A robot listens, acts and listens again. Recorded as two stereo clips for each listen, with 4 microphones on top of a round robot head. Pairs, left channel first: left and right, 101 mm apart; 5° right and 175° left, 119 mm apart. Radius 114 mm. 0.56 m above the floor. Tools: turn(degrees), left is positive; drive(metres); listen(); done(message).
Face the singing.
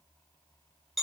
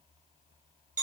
listen()
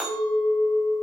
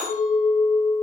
listen()
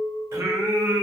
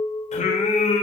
turn(degrees=-25)
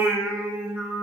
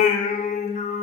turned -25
turn(degrees=-15)
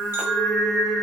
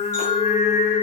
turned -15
done("Found it: singing, straight ahead.")